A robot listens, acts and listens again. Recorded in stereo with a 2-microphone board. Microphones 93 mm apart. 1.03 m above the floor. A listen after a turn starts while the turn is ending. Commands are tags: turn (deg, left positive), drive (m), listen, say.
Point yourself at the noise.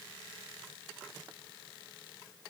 <listen/>
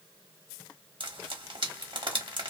<turn deg="-60"/>
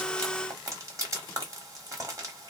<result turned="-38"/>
<turn deg="-40"/>
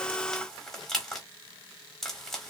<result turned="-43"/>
<say>Facing the frying, 1 to 2 m away.</say>